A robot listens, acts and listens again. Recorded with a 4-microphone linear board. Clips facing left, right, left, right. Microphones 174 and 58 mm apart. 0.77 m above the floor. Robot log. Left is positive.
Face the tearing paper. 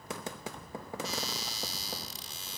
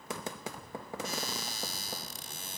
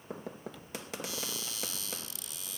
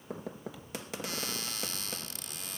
cmd idle
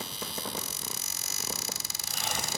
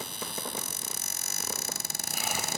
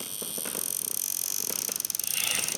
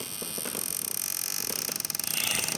cmd idle
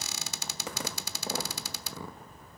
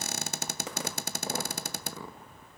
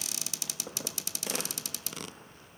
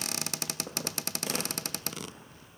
end: I can't make out tearing paper to turn to.